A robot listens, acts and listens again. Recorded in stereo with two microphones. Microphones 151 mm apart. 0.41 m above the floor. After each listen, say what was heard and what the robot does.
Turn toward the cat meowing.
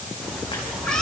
Turn 30° left.
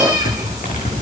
So it is at 25° right. Turn 25° right.
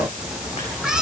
Facing the cat meowing.